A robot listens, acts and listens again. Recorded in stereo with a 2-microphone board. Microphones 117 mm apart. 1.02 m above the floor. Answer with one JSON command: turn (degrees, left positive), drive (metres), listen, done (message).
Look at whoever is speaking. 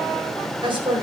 {"turn": -45}
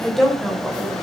{"done": "Facing the woman speaking."}